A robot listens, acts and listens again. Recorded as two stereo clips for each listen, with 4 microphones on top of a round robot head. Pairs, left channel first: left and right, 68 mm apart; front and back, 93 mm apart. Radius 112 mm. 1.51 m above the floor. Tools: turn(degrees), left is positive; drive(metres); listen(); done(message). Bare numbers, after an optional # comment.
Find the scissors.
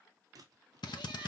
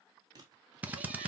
# The scissors: 130° right.
turn(-130)
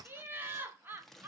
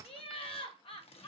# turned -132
done("Facing the scissors.")